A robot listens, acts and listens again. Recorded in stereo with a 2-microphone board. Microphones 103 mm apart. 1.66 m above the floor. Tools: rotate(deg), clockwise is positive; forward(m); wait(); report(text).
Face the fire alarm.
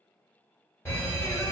rotate(-25)
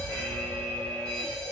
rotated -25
report("Facing the fire alarm.")